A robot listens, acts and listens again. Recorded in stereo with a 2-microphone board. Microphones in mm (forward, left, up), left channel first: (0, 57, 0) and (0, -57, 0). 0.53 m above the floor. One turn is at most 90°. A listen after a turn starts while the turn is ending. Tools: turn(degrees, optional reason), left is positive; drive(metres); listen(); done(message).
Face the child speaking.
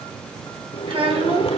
turn(degrees=-55, reason="The child speaking: about 55° right or 125° right.")
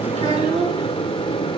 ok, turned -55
turn(degrees=-60, reason="So it is at 60° right.")
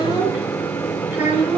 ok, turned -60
turn(degrees=-15, reason="The child speaking is now 15° right.")
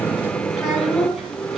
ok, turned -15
done("Found it: a child speaking, straight ahead.")